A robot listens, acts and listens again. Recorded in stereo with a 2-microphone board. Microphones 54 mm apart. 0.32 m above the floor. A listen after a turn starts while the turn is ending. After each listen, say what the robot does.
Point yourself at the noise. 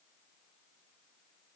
Keep listening.
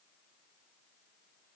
Keep listening.
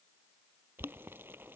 Turn 40° right.
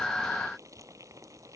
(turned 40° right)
Turn 95° right.
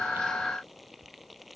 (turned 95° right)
Facing the boiling.